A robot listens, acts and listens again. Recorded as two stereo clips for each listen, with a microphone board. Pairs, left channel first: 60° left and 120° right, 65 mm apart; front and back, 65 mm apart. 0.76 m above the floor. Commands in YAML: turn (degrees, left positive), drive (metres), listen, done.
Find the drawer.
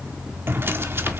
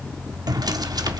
turn: -175
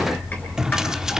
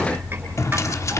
turn: -40
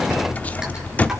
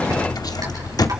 done: "Found it: a drawer, straight ahead."